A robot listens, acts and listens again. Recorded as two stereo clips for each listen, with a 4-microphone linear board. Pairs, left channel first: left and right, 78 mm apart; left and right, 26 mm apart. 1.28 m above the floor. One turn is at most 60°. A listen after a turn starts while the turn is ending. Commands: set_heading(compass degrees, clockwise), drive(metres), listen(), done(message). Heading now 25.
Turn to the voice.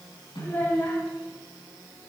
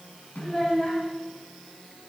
set_heading(0)
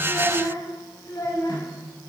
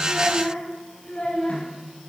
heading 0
set_heading(300)
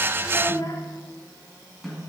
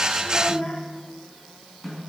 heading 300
set_heading(245)
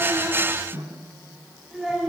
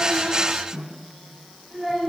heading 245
done("Facing the child speaking, 2 to 4 m away.")